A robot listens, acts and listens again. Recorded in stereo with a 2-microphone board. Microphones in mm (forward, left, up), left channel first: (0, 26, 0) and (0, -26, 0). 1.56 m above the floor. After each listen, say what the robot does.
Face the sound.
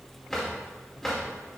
Turn 30° left.
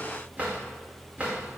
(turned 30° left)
Turn 25° right.
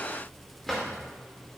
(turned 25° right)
Found it: a drawer, straight ahead, 2 to 4 m away.